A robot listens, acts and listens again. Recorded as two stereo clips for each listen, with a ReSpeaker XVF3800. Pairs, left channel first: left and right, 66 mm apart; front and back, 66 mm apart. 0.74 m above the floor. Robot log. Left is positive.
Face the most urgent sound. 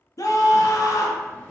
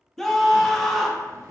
note: The scream: 85° left.
cmd yaw +85
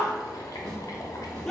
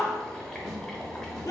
note: The scream is now 10° left.
cmd yaw +10
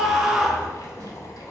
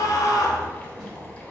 end: Facing the scream.